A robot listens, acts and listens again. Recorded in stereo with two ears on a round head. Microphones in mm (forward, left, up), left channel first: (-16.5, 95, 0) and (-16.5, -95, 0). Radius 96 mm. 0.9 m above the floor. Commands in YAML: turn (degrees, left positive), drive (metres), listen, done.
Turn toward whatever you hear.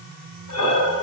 turn: 70
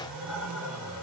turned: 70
done: "Facing the breathing, over 4 m away."